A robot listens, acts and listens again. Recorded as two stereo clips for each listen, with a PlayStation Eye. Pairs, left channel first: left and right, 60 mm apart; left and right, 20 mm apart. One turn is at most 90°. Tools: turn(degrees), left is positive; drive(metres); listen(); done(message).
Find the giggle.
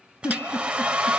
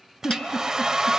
turn(degrees=55)
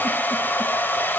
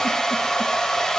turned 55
listen()
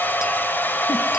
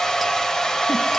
listen()
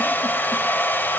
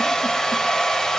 done("I heard a giggle, but can't make it out now. It was about straight ahead or 70° left.")